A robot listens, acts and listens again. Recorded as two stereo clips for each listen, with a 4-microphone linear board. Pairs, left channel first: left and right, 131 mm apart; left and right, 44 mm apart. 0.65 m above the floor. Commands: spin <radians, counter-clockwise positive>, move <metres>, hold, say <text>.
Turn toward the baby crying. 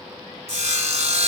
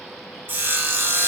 hold
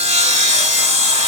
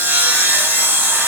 hold
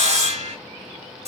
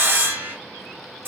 say I can't make out a baby crying to turn to.